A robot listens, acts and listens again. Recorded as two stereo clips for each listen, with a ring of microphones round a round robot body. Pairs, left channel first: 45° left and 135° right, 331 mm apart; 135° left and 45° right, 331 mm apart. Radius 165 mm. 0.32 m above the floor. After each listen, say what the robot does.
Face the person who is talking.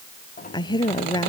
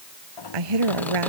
Turn 35° right.
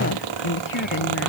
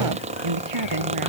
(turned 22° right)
Turn 10° right.
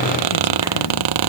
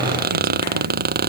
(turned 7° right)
Keep listening.
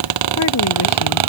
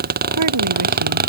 Keep listening.
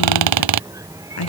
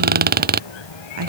Facing the woman speaking.